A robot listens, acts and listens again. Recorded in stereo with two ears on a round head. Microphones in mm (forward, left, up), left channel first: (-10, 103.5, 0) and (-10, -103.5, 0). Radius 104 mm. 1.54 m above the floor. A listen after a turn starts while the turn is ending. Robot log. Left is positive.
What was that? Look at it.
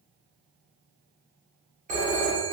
note: The phone ringing: about 35° right or 145° right.
cmd yaw -35
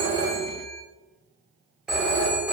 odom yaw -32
end: Facing the phone ringing.